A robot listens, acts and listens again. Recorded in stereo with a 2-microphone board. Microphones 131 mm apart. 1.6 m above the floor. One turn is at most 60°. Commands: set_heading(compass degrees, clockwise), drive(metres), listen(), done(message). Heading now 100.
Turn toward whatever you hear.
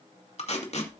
set_heading(45)
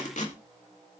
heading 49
set_heading(349)
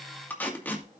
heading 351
set_heading(336)
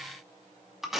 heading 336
done("Facing the tape being pulled, 2 to 4 m away.")